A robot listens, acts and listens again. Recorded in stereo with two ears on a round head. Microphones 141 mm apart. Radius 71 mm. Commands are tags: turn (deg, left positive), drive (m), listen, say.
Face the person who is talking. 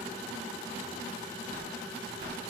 <listen/>
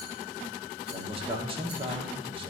<turn deg="-35"/>
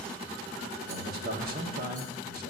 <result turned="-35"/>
<turn deg="-105"/>
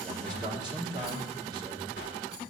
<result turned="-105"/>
<turn deg="-25"/>
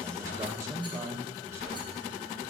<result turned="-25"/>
<turn deg="-20"/>
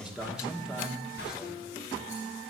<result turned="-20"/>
<say>Found it: a man speaking, straight ahead.</say>